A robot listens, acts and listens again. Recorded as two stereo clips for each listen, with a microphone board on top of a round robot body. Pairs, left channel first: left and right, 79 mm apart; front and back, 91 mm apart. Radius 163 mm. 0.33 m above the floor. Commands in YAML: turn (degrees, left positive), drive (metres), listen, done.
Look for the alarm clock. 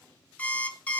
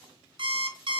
turn: 160
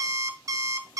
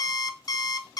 turn: -45
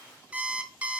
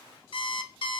turn: -15
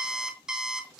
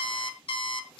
turn: -10
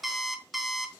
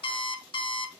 done: "Found it: an alarm clock, straight ahead, 1 to 2 m away."